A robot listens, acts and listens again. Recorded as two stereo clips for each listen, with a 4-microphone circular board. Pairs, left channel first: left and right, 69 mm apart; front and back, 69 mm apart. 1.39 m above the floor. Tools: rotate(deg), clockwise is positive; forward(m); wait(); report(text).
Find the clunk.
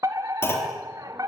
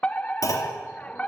rotate(-40)
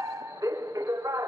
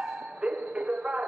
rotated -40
report("I heard a clunk from this way, but can't make it out now.")